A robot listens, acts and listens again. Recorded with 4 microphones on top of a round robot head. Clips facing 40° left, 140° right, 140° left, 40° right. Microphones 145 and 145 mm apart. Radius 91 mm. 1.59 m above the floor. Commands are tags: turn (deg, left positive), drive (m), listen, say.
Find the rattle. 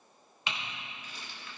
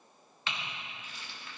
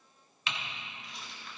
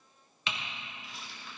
<turn deg="50"/>
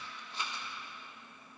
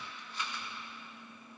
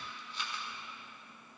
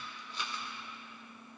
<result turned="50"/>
<turn deg="-25"/>
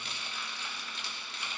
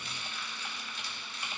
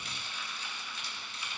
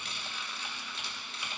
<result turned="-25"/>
<say>Facing the rattle, 1 to 2 m away.</say>